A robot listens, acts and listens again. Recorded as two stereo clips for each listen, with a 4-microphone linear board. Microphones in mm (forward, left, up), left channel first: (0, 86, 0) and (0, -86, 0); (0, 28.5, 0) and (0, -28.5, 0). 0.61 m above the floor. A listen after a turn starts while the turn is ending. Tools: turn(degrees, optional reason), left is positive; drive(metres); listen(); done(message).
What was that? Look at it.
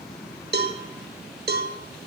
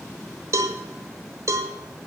turn(degrees=-70, reason="The cowbell: about 70° right or 110° right.")
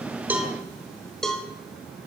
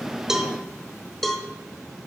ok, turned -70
done("Found it: a cowbell, straight ahead.")